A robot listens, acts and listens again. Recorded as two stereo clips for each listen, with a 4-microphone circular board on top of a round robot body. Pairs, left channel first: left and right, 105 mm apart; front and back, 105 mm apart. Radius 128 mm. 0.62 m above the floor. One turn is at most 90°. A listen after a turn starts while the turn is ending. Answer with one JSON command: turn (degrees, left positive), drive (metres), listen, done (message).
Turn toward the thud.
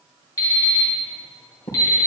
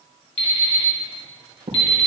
{"turn": 90}
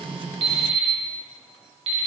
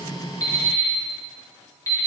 {"turn": 40}
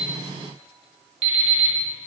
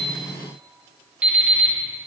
{"done": "Facing where the thud came from. I can't hear it now."}